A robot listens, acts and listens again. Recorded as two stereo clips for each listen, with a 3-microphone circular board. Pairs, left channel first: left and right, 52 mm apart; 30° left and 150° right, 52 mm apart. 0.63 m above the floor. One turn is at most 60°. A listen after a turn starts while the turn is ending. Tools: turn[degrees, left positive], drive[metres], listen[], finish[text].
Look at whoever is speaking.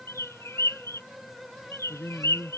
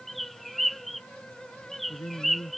Thought: The man speaking: 45° left.
Action: turn[45]
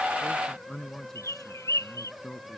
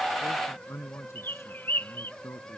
Thought: The man speaking is now 10° left.
Action: turn[10]
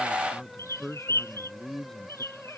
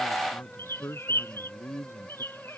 Thought: The man speaking is now 10° left.
Action: turn[10]
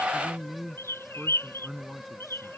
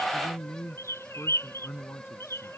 Action: finish[Facing the man speaking.]